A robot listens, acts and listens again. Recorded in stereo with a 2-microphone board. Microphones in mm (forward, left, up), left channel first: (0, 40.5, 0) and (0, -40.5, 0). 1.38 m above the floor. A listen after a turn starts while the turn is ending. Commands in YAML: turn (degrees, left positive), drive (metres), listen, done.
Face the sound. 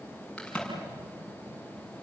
turn: 30
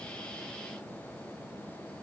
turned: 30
listen: true
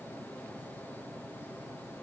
done: "I heard a crack, but can't make it out now. It was about 20° right or 140° left."